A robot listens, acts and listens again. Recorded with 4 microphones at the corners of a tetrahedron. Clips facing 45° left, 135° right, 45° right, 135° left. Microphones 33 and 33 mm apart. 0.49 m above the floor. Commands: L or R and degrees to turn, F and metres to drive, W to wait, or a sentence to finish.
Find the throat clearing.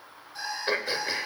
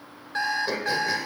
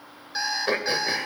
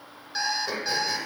R10
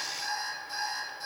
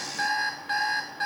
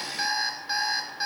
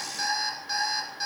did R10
W
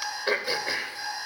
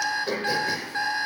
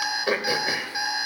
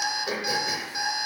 Facing the throat clearing, 1 to 2 m away.